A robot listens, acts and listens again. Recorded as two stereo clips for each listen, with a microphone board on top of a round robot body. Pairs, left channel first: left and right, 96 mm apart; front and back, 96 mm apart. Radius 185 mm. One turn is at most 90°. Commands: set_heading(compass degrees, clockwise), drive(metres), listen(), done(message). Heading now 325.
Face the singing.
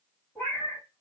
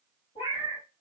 listen()
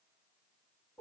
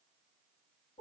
listen()
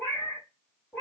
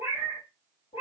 done("I can't make out singing to turn to.")